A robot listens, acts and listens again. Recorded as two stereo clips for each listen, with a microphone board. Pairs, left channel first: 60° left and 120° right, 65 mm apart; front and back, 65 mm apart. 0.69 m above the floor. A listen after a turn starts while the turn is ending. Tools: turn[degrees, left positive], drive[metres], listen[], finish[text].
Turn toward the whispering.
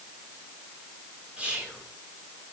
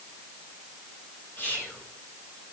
Thought: The whispering: 50° right.
Action: turn[-50]
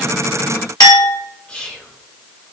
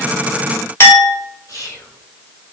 Thought: The whispering is now 10° right.
Action: turn[-10]
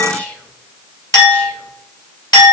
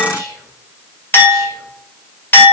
Action: finish[Facing the whispering, 2 to 4 m away.]